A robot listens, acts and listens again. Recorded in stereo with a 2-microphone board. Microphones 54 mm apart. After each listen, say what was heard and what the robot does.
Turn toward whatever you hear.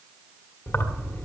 The keys jangling: about 50° left or 130° left. Turn 50° left.
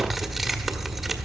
Facing the keys jangling.